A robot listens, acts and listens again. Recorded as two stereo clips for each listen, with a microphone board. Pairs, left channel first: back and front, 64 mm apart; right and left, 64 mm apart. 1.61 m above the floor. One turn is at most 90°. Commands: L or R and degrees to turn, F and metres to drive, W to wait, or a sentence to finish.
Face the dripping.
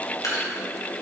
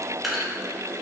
L90
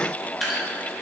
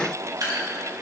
L85
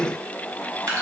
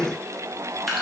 Facing the dripping.